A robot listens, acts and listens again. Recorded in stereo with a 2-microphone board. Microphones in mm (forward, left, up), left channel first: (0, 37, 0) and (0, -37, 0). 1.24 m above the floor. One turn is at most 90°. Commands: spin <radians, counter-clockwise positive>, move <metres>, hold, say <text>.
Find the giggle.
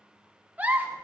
spin -0.35
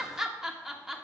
spin -0.17
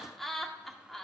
say Facing the giggle.